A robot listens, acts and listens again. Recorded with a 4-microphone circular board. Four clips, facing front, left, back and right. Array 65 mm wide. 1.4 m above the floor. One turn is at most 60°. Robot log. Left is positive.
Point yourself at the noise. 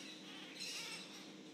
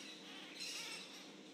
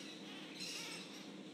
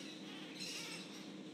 cmd idle
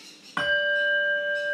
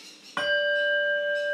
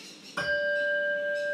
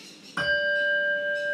note: The bell: 40° left.
cmd yaw +40
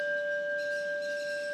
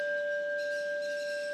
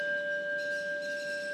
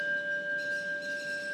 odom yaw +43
end: Found it: a bell, straight ahead, 1 to 2 m away.